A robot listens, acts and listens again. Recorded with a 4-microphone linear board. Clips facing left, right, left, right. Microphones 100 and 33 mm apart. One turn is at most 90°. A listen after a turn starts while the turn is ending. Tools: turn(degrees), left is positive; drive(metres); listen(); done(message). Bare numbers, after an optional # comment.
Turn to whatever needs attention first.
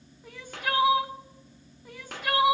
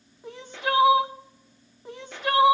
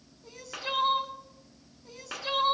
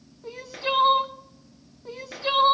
# The crying: about 25° right or 155° right.
turn(-25)
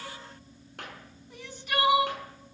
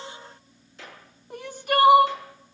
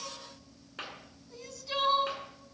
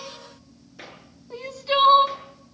# So it is at 125° right.
turn(-90)
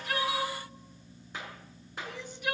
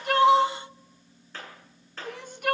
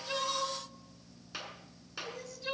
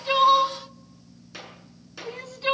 # The crying is now 75° right.
turn(-75)
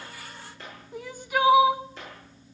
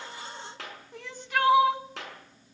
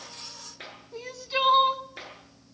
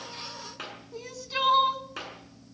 # The crying is now 15° left.
turn(15)
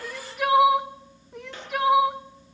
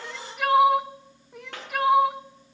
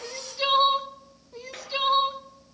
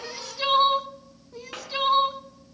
done("Facing the crying, under 1 m away.")